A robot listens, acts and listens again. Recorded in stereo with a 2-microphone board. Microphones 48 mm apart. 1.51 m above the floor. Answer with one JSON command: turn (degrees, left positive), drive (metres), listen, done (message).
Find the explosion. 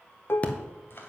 {"turn": 30}
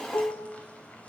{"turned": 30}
{"listen": true}
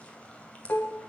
{"done": "I heard an explosion, but can't make it out now. It was about straight ahead or 120° left."}